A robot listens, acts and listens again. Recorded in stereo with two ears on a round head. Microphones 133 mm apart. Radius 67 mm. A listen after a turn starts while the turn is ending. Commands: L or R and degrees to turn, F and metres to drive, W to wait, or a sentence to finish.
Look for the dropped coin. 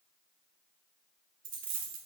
R60
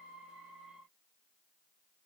W
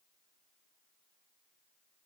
I heard a dropped coin, but can't make it out now. It was about straight ahead or 60° right.